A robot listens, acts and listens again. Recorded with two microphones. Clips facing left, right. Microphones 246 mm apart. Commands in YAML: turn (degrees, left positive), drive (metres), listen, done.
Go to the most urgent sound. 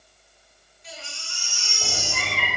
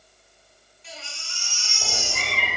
turn: 45
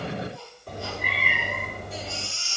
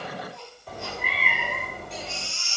drive: 1.0
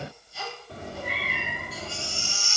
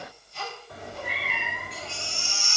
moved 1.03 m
drive: 1.0
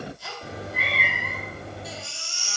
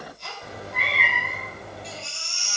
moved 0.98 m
drive: 1.0
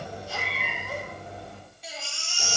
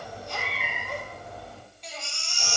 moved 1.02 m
drive: 1.0
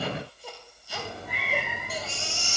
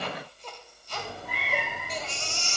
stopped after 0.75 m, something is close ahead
turn: 15
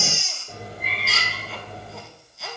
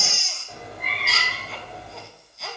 done: "Arrived at the baby crying, straight ahead."